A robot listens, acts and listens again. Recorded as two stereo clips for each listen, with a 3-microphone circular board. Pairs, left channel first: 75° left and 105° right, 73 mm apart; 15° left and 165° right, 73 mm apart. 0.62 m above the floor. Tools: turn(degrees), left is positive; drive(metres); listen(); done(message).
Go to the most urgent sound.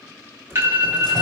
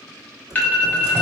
turn(degrees=-55)
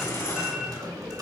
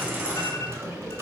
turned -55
listen()
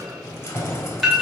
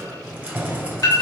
turn(degrees=-10)
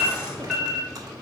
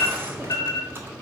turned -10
drive(metres=1.0)
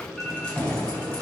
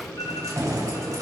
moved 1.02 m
listen()
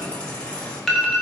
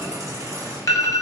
turn(degrees=-10)
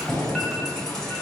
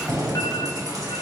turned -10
listen()
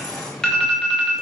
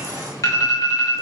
drive(metres=1.0)
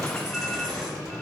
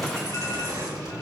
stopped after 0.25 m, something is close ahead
listen()
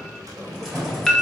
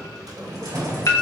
done("Arrived at the alarm, straight ahead.")